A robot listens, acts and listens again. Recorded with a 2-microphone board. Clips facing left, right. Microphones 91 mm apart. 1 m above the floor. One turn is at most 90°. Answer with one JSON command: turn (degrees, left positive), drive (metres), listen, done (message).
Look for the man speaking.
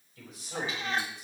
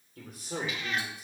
{"turn": -50}
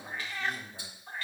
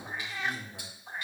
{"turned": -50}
{"turn": -85}
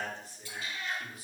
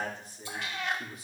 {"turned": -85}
{"turn": -25}
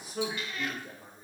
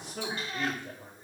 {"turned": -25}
{"done": "Facing the man speaking."}